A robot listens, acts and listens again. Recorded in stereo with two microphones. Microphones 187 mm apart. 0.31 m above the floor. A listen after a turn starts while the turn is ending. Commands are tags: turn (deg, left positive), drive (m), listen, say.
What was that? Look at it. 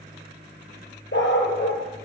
<turn deg="90"/>
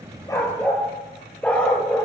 <say>Found it: a dog barking, straight ahead, 2 to 4 m away.</say>